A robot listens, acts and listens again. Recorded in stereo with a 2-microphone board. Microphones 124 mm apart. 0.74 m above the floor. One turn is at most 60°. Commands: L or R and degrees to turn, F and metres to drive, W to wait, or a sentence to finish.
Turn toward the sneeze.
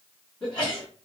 L45
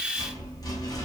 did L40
W
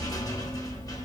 I heard a sneeze, but can't make it out now. It was about 5° left or 95° left.